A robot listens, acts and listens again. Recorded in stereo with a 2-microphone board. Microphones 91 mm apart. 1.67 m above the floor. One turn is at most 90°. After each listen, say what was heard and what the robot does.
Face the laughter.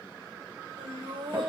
The laughter: about 75° right or 105° right. Turn 75° right.
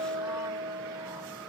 Keep listening.
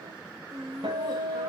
So it is at 40° right. Turn 40° right.
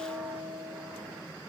Keep listening.
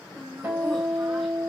Facing the laughter.